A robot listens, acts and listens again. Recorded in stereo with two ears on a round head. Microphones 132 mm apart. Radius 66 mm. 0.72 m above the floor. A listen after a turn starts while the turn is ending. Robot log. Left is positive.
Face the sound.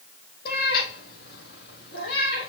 note: The cat meowing: about 75° left or 105° left.
cmd yaw +75
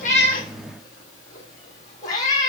note: So it is at 25° left.
cmd yaw +25
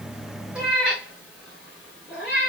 end: Facing the cat meowing.